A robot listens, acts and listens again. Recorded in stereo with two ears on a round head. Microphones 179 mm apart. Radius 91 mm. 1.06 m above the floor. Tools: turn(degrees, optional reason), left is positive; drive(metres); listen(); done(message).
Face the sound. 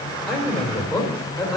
turn(degrees=30)
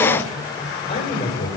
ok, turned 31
turn(degrees=150, reason="So it is at 150° left.")
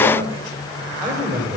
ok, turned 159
turn(degrees=-10, reason="The man speaking is now 10° right.")
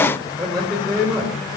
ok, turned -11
done("Facing the man speaking.")